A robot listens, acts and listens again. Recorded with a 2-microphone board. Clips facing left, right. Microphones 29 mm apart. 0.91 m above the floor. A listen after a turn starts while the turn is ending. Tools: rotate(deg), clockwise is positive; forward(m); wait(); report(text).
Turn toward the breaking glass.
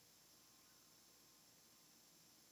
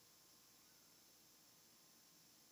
wait()
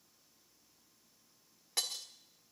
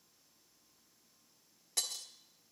rotate(-30)
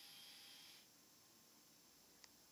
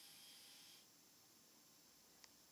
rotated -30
wait()
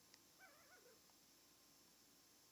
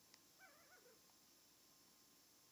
report("I heard breaking glass, but can't make it out now. It was about straight ahead or 120° left.")